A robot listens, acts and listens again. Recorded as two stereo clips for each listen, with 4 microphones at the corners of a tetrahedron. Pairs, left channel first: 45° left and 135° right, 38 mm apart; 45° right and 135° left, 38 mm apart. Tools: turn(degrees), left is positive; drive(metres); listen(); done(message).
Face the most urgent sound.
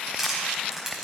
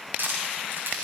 listen()
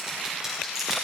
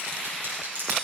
listen()
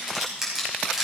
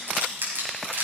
done("I can't make out anything urgent to turn to.")